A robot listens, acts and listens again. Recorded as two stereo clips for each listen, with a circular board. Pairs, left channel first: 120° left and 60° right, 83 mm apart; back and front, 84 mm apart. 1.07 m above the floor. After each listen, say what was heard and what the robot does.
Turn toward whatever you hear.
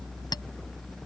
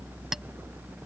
The clink: 85° left. Turn 85° left.
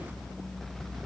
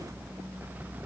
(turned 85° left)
Keep listening.
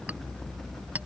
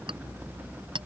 The clink is now 10° left. Turn 10° left.
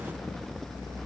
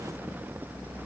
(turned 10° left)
Keep listening.
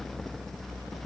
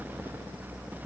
Keep listening.
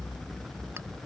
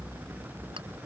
I heard a clink from this way, but can't make it out now.